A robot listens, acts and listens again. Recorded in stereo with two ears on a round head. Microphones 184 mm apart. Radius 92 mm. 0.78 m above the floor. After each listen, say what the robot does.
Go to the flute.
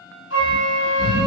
Turn 60° left.
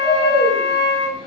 Turn 45° left.
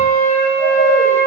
Drive 1.0 m forward.
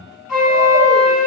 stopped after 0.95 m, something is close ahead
I am next to the flute.